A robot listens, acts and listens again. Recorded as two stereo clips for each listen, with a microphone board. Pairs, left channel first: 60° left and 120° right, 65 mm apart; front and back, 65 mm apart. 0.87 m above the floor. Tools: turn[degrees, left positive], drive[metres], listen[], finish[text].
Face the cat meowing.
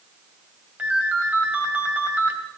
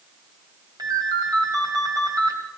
Action: listen[]
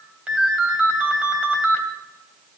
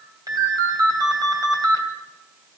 Action: listen[]
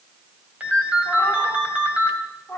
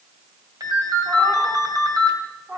Thought: The cat meowing: 125° left.
Action: turn[125]
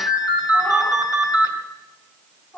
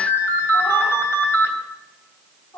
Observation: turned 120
Action: finish[Facing the cat meowing.]